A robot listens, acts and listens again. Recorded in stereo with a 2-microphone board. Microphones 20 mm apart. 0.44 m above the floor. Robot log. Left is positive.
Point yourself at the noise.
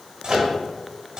note: The microwave: about 60° right or 120° right.
cmd yaw -60
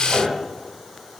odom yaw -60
note: So it is at 20° right.
cmd yaw -20
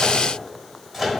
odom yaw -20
note: The microwave is now 10° right.
cmd yaw -10
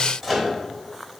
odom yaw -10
end: Facing the microwave.